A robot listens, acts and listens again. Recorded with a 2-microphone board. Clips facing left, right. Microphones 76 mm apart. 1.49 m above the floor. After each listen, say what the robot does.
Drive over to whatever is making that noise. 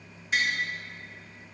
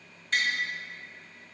Turn 30° left.
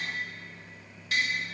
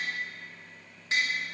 Turn 25° right.
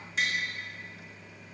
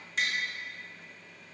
Drive 1.0 m forward.
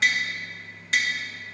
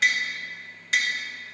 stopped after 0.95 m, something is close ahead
I am next to the tapping.